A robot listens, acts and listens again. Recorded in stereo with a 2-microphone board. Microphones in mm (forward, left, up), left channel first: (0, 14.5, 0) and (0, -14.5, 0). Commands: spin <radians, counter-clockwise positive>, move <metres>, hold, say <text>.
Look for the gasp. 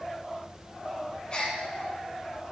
spin 0.61
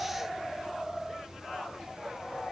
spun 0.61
hold
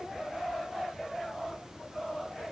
say I heard a gasp, but can't make it out now. It was about straight ahead or 110° left.